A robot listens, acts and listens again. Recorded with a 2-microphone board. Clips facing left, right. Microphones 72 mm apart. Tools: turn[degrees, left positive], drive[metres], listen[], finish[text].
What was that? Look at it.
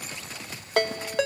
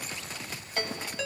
Action: turn[90]
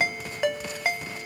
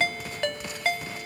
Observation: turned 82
Thought: So it is at 10° left.
Action: turn[10]
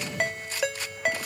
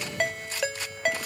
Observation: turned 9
Action: finish[Facing the ringtone, under 1 m away.]